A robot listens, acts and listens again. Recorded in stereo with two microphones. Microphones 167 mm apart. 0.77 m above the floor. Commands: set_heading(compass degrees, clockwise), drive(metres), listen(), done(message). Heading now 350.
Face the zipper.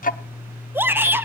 listen()
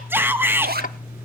set_heading(60)
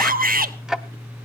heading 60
listen()
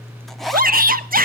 listen()
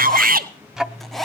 done("Found it: a zipper, straight ahead, under 1 m away.")